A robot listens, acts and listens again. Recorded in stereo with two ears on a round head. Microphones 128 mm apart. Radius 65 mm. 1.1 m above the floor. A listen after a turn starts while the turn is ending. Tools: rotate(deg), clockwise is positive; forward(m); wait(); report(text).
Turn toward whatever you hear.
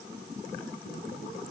wait()
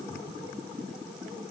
wait()
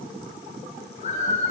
rotate(-55)
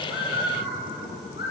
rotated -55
rotate(-75)
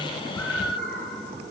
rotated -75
report("Facing the bird.")